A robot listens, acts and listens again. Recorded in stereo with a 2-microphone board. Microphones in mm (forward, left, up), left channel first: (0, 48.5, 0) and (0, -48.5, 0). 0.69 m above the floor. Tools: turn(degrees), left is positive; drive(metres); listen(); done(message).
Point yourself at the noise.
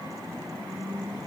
listen()
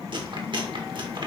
turn(degrees=-55)
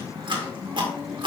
turn(degrees=-65)
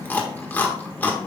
turn(degrees=20)
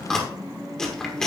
done("Found it: chewing, straight ahead.")